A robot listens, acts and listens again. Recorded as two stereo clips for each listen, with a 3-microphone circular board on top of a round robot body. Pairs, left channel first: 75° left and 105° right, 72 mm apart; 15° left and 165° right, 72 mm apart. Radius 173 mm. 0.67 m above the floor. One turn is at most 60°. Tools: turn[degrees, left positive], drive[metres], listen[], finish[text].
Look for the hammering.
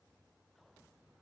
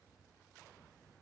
Action: listen[]
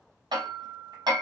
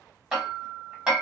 Thought: The hammering: 85° right.
Action: turn[-60]
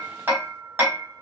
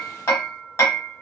Thought: The hammering is now 45° right.
Action: turn[-45]
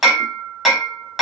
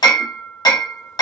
Thought: The hammering is now 20° right.
Action: turn[-20]
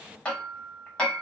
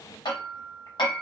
Action: finish[Facing the hammering, 1 to 2 m away.]